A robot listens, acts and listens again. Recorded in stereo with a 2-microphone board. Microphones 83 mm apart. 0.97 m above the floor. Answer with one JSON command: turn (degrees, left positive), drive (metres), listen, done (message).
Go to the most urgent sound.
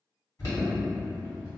{"turn": 40}
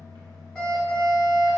{"drive": 1.0}
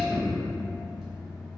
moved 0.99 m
{"drive": 1.0}
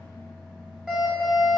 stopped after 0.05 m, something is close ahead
{"turn": -10}
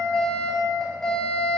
{"done": "I am next to the alarm."}